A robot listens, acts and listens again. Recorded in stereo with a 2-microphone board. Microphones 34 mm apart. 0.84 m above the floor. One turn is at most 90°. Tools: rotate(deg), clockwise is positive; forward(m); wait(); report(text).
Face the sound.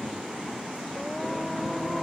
rotate(-30)
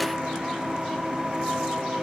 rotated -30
rotate(20)
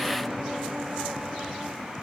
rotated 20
report("Found it: singing, straight ahead.")